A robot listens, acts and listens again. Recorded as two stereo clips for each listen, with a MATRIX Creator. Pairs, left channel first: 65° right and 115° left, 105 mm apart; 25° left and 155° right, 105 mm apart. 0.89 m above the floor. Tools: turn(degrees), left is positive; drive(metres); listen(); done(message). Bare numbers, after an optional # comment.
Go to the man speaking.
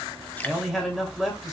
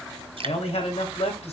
# The man speaking: 25° left.
turn(25)
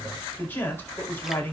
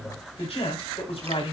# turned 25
drive(1.0)
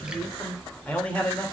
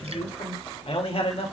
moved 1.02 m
# The man speaking is now 10° left.
turn(10)
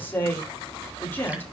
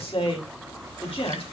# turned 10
drive(1.0)
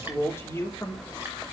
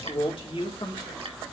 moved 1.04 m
drive(1.0)
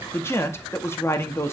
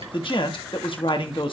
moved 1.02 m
drive(1.0)
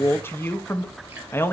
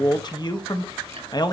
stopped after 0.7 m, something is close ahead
done("I am next to the man speaking.")